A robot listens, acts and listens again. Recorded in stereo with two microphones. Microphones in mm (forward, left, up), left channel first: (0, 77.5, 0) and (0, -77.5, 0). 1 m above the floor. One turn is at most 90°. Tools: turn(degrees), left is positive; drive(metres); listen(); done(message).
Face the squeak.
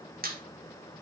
turn(degrees=-75)
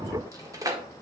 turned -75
turn(degrees=-25)
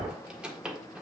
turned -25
done("Found it: a squeak, straight ahead.")